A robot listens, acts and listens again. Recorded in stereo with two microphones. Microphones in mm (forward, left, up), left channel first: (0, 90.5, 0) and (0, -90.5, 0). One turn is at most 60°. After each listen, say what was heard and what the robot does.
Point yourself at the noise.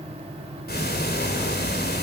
The ticking: about 60° left or 120° left. Turn 60° left.
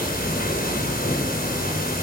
So it is at 55° left. Turn 55° left.
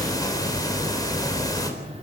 The ticking is now 20° left. Turn 20° left.
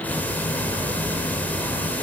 The ticking is now 10° left. Turn 10° left.
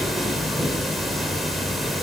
Facing the ticking.